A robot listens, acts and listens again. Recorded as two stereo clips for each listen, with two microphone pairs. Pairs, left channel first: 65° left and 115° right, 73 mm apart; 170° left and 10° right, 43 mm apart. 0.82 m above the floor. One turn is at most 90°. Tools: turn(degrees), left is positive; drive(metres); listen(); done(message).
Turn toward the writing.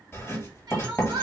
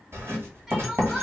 done("Facing the writing.")